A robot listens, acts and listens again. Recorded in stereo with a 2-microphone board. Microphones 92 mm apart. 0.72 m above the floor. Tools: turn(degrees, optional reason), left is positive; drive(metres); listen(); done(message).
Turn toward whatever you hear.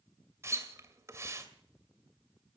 turn(degrees=-30, reason="The splash: about 30° right or 150° right.")
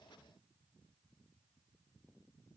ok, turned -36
listen()
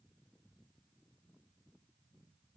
done("I heard a splash, but can't make it out now. It was about 5° left or 115° right.")